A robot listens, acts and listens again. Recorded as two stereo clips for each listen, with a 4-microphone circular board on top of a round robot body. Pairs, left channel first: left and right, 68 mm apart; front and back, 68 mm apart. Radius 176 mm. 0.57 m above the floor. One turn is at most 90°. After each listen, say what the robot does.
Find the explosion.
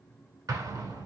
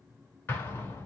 Turn 60° right.
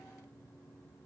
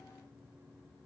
I heard an explosion from this way, but can't make it out now.